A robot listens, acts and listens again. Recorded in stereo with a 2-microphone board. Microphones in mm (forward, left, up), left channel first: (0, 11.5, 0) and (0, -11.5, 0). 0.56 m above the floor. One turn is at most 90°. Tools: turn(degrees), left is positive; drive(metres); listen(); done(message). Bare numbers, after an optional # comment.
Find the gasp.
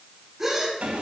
# The gasp: about 15° right or 165° right.
turn(-15)
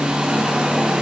listen()
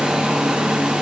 done("I heard a gasp, but can't make it out now. It was about straight ahead or 150° right.")